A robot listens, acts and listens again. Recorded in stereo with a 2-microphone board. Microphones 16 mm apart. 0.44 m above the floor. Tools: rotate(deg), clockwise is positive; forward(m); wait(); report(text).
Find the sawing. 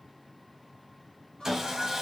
rotate(40)
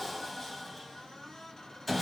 report("Facing the sawing.")